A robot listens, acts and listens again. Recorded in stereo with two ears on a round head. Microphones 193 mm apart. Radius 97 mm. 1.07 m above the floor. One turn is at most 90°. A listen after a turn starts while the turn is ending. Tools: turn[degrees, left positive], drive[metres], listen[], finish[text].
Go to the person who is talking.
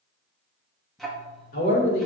Thought: The man speaking: about 40° left or 140° left.
Action: turn[40]
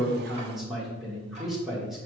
Action: drive[1.0]
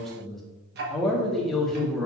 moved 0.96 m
Action: drive[1.0]
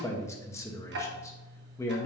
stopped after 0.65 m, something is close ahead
Thought: The man speaking is now 15° left.
Action: turn[15]
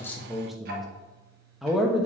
Action: finish[I am next to the man speaking.]